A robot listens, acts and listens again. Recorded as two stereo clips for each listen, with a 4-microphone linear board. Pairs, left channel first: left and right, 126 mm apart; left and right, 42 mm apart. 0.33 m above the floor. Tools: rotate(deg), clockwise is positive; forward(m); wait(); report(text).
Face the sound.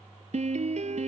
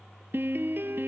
rotate(60)
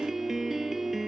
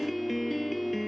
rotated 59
report("Found it: a piano, straight ahead.")